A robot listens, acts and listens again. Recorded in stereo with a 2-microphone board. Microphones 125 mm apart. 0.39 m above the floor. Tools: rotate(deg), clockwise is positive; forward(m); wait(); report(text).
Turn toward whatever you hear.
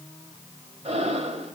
rotate(60)
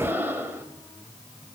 rotate(20)
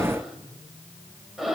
report("Found it: breathing, straight ahead, 1 to 2 m away.")